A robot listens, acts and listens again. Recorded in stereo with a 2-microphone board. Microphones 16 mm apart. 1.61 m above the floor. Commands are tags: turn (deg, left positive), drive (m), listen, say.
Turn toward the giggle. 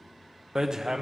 <listen/>
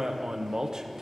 <listen/>
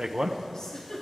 <turn deg="60"/>
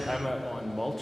<listen/>
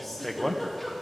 <say>Found it: a giggle, straight ahead.</say>